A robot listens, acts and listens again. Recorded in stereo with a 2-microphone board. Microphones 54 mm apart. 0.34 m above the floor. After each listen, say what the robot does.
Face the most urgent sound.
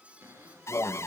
Turn 60° left.
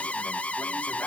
Turn 30° left.
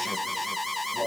Facing the alarm.